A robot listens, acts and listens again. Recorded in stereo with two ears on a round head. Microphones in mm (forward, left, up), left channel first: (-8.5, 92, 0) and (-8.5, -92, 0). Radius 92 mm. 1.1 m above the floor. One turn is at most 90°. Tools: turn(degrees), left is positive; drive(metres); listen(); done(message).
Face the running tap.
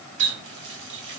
turn(degrees=-60)
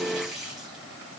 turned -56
done("Found it: a running tap, straight ahead, 2 to 4 m away.")